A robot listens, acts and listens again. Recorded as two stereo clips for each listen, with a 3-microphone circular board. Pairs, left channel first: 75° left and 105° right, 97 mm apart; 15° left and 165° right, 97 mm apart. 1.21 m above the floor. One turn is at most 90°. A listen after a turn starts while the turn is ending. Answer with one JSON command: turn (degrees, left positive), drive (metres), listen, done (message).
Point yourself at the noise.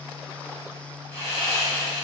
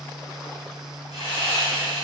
{"turn": 10}
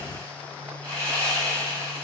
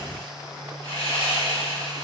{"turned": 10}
{"done": "Facing the sawing."}